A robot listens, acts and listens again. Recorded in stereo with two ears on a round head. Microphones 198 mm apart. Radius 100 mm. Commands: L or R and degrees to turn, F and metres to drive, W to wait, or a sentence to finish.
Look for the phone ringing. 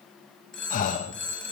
L30
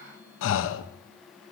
W
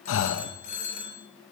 L145
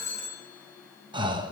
L15
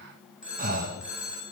Found it: a phone ringing, straight ahead, over 4 m away.